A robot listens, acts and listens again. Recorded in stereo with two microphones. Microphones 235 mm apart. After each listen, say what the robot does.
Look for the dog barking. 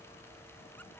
Keep listening.
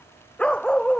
Turn 30° left.
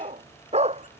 Turn 25° right.
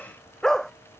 Facing the dog barking.